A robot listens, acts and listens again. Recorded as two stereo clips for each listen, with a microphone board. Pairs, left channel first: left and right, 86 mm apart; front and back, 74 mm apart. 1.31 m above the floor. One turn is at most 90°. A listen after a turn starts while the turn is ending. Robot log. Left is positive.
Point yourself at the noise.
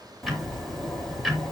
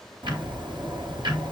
note: The ticking: straight behind.
cmd yaw +90
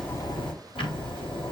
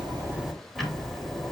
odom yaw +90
note: The ticking is now 90° left.
cmd yaw +90
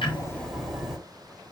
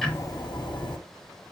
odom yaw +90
end: Found it: ticking, straight ahead.